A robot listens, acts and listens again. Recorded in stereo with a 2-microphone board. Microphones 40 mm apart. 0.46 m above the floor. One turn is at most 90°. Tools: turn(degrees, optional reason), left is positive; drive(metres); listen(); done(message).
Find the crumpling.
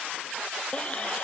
listen()
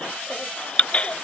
listen()
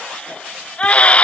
done("I can't make out crumpling, only a baby crying.")